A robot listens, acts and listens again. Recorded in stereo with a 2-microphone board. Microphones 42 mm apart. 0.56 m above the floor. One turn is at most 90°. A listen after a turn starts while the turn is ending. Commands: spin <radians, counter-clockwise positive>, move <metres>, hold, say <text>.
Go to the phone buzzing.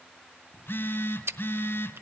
spin 1.22
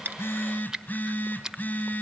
spin 0.70
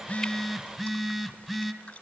spin -0.17
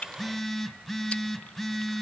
move 1.0
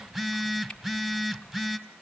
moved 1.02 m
spin -0.17
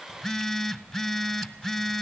move 1.0
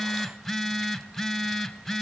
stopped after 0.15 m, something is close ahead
say I am next to the phone buzzing.